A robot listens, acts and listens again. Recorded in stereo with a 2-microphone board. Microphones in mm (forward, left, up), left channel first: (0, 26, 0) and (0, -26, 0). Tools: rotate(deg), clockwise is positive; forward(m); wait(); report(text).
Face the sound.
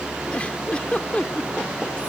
rotate(-25)
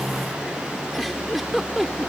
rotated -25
report("Found it: a giggle, straight ahead.")